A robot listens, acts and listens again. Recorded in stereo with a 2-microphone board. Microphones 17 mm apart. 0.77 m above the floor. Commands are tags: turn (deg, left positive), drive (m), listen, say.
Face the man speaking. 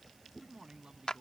<turn deg="-90"/>
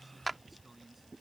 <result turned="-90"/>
<turn deg="-10"/>
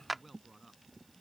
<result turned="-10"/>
<say>Found it: a man speaking, straight ahead.</say>